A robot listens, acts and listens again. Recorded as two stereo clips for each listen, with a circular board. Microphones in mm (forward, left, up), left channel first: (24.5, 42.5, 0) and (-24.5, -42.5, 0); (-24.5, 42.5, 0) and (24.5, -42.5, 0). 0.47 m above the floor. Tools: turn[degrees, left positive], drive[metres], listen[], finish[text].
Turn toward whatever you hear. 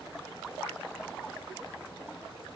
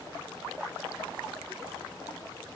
Action: listen[]
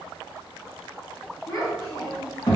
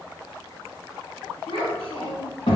Thought: The child speaking: 110° left.
Action: turn[110]
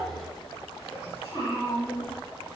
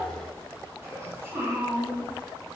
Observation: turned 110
Action: finish[Facing the child speaking, 1 to 2 m away.]